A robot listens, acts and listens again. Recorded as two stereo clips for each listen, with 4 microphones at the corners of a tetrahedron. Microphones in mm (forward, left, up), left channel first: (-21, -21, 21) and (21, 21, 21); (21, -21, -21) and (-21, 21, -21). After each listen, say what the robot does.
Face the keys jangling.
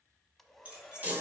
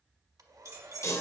Turn 115° left.
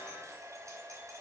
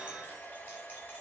Keep listening.
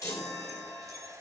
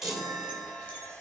Keep listening.
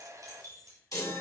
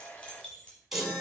Turn 25° left.
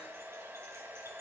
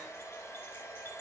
Keep listening.
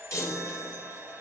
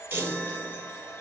Keep listening.
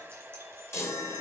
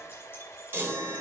I heard keys jangling from this way, but can't make it out now.